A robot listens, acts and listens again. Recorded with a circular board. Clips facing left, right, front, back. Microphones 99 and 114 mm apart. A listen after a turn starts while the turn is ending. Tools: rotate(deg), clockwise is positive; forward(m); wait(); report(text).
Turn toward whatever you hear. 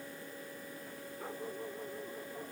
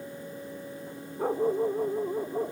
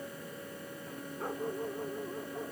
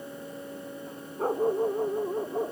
rotate(135)
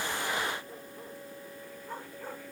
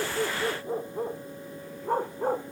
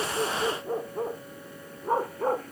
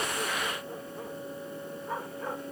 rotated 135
rotate(50)
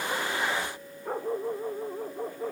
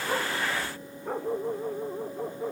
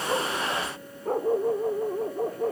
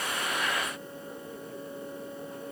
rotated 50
report("Facing the dog barking.")